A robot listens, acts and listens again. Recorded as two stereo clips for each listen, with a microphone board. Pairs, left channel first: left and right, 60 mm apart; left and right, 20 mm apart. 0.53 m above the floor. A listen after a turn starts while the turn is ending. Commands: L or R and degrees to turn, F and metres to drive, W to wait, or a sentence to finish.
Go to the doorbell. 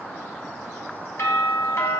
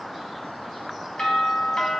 L60
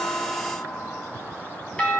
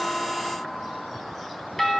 L25
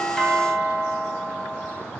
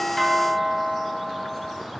F1.0
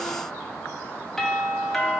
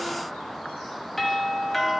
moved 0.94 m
L10
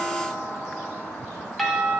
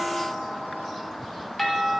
F1.0
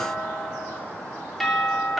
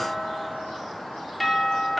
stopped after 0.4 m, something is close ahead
Arrived at the doorbell, straight ahead.